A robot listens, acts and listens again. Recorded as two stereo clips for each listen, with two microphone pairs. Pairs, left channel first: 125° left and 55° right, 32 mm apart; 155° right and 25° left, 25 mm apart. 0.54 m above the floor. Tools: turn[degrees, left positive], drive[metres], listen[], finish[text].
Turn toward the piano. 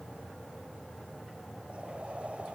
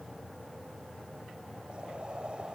Action: listen[]
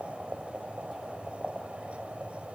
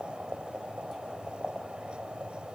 Action: listen[]
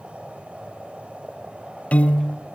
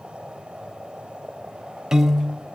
Thought: The piano: 85° left.
Action: turn[85]
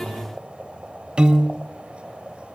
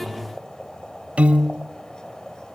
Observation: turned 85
Action: finish[Facing the piano, under 1 m away.]